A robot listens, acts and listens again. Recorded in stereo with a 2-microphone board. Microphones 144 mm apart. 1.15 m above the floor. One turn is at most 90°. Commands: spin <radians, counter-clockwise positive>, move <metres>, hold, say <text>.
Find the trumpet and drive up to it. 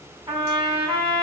spin -0.61
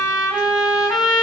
move 1.0
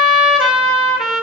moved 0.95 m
move 1.0
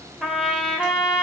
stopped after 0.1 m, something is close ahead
say I am next to the trumpet.